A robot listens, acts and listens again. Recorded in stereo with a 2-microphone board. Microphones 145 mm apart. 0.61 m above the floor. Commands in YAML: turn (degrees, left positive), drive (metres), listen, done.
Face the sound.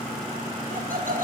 turn: -70
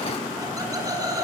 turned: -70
turn: -25
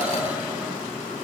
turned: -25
listen: true
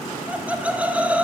turn: -10
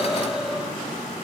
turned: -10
listen: true
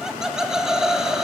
done: "Facing the laughter."